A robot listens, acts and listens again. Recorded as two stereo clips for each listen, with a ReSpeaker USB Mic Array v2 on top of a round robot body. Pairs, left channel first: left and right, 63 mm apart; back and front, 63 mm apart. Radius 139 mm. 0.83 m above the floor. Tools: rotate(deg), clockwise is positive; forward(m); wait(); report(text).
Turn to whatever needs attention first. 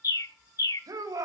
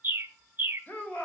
rotate(115)
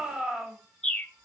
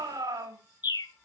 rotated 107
report("Found it: a shout, straight ahead, over 4 m away.")